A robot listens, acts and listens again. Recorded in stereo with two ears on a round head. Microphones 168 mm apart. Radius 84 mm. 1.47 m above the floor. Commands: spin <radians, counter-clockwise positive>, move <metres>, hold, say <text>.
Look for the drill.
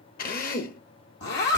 spin 0.87
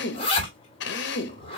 spin 1.31
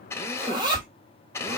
spin 0.26
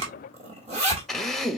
say Facing the drill.